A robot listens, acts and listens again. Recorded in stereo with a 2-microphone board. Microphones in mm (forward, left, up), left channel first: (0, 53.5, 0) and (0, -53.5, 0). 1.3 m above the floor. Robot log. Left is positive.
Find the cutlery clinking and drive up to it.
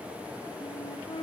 cmd idle
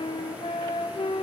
cmd idle
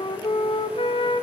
end: I can't make out cutlery clinking to turn to.